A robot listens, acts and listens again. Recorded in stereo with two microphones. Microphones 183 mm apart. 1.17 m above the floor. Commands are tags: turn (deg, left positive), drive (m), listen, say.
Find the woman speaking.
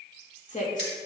<turn deg="45"/>
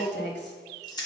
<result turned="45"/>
<turn deg="105"/>
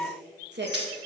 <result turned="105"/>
<turn deg="-70"/>
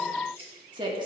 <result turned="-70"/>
<turn deg="-25"/>
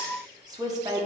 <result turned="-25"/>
<turn deg="-20"/>
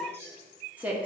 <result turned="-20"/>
<turn deg="-10"/>
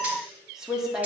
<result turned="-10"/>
<say>Facing the woman speaking, 1 to 2 m away.</say>